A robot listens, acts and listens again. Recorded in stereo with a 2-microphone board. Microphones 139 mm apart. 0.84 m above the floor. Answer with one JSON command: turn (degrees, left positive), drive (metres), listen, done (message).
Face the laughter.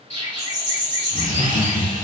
{"turn": 65}
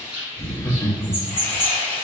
{"turn": 20}
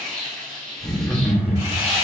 {"done": "Facing the laughter."}